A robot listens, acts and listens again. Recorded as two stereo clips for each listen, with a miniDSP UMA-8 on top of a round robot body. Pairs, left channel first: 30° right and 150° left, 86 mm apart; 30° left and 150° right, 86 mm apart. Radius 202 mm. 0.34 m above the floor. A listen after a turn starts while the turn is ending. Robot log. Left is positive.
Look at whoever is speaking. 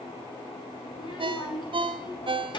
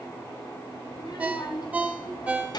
end: Found it: a child speaking, straight ahead, over 4 m away.